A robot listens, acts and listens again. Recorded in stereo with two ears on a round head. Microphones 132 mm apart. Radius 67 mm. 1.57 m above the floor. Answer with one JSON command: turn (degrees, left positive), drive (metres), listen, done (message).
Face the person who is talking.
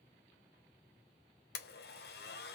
{"listen": true}
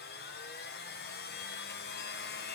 {"listen": true}
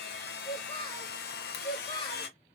{"turn": 30}
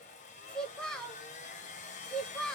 {"done": "Found it: a child speaking, straight ahead, 1 to 2 m away."}